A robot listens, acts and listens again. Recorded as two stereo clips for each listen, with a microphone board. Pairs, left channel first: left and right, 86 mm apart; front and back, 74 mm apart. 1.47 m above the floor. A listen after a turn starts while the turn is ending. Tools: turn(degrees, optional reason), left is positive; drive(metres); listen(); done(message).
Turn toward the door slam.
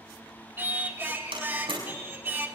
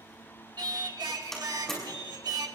turn(degrees=-85, reason="The door slam: 85° right.")
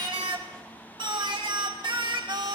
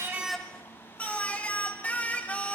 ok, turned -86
done("Facing where the door slam came from. I can't hear it now.")